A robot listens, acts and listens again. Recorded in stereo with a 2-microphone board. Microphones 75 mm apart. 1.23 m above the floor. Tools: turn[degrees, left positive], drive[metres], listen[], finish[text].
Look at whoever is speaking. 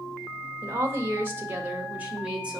Thought: The woman speaking: about 15° right or 165° right.
Action: turn[-15]
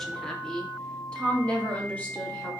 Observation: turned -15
Thought: So it is at 20° left.
Action: turn[20]
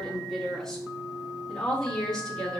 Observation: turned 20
Thought: The woman speaking is now 10° left.
Action: turn[10]
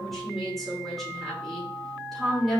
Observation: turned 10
Action: finish[Found it: a woman speaking, straight ahead, 2 to 4 m away.]